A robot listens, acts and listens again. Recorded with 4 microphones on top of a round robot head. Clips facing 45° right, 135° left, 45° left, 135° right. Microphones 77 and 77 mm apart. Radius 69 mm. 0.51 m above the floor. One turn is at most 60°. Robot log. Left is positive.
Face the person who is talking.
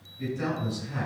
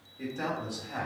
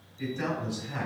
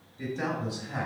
note: The man speaking: 175° left.
cmd yaw +60
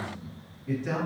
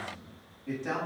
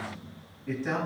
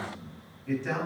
note: The man speaking is now 125° left.
cmd yaw +60
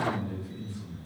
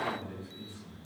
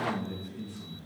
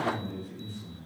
note: The man speaking is now 75° left.
cmd yaw +60
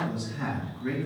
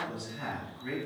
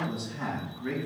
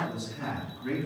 note: The man speaking is now 25° left.
cmd yaw +25
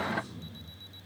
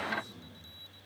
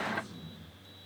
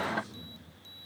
end: Found it: a man speaking, straight ahead.